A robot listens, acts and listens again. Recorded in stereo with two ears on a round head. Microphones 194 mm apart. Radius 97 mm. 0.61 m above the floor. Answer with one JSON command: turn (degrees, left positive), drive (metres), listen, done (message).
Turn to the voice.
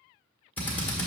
{"listen": true}
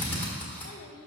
{"turn": 65}
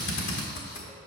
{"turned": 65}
{"listen": true}
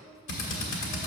{"done": "Facing the child speaking."}